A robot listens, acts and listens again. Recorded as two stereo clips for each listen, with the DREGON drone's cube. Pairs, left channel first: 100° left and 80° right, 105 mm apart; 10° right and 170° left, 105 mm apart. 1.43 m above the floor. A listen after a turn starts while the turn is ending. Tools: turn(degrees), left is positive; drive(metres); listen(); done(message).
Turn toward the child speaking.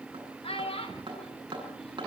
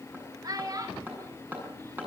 turn(degrees=120)
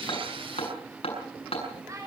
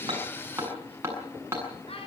turn(degrees=-25)
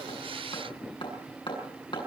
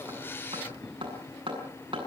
listen()
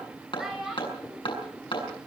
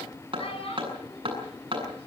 done("Facing the child speaking, over 4 m away.")